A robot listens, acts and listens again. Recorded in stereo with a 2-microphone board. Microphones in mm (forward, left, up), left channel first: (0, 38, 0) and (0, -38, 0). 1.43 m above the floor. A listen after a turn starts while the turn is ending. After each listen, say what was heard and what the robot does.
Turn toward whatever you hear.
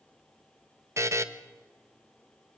The buzzer: about 40° right or 140° right. Turn 40° right.
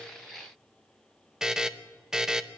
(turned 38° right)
Found it: a buzzer, straight ahead, 1 to 2 m away.